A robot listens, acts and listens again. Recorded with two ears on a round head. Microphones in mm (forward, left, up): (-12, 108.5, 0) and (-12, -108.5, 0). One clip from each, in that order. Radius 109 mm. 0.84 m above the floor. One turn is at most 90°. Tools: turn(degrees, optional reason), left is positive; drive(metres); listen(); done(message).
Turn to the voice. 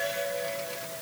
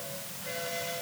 listen()
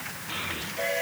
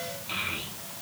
turn(degrees=-35, reason="The child speaking: about 35° right or 145° right.")
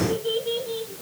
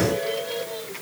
done("Found it: a child speaking, straight ahead.")